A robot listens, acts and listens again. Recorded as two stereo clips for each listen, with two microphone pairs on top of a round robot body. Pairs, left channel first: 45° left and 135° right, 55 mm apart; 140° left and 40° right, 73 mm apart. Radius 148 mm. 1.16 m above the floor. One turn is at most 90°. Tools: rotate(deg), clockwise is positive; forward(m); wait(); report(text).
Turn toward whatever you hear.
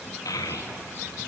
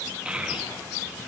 rotate(-40)
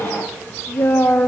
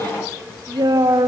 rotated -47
rotate(10)
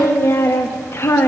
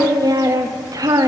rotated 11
report("Found it: a child speaking, straight ahead, 1 to 2 m away.")